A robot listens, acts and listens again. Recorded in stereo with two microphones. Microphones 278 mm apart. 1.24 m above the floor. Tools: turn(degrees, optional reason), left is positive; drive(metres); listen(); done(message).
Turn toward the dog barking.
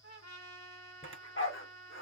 turn(degrees=50, reason="The dog barking: about 50° left or 130° left.")
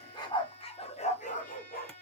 turn(degrees=35, reason="So it is at 35° left.")
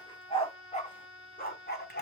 turn(degrees=40, reason="The dog barking is now 40° left.")
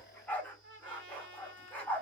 done("Facing the dog barking.")